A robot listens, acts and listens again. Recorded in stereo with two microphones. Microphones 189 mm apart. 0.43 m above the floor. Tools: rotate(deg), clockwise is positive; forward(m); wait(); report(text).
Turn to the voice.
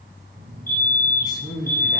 rotate(-20)
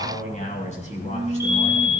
rotate(-140)
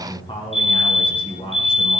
rotate(-30)
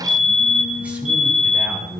report("Found it: a man speaking, straight ahead, over 4 m away.")